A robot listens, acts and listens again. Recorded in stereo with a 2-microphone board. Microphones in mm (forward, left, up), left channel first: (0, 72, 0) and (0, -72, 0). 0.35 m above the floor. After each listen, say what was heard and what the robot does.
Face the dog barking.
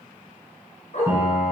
The dog barking: about 55° left or 125° left. Turn 55° left.
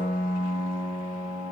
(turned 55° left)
Keep listening.
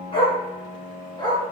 So it is at 30° left. Turn 30° left.
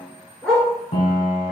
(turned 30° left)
Facing the dog barking.